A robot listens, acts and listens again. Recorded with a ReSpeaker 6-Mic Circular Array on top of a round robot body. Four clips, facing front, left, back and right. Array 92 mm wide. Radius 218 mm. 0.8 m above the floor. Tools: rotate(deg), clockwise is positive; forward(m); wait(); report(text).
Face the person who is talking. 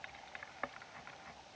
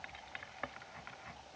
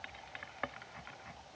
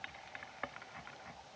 wait()
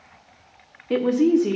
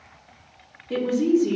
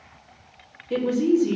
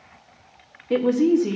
rotate(25)
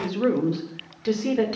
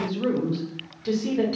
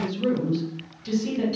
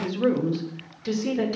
report("Found it: a woman speaking, straight ahead, 2 to 4 m away.")